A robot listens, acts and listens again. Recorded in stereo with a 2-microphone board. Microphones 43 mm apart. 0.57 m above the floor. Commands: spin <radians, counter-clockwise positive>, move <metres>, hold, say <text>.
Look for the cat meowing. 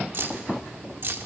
hold
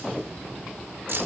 hold
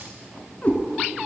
spin 0.70
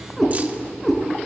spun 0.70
say Facing the cat meowing.